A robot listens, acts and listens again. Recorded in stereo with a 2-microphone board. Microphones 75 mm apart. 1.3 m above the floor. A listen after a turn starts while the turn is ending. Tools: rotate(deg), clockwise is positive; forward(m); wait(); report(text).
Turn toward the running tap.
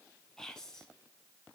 wait()
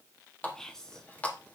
rotate(-20)
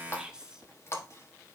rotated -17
rotate(-145)
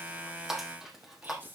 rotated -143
report("Facing the running tap.")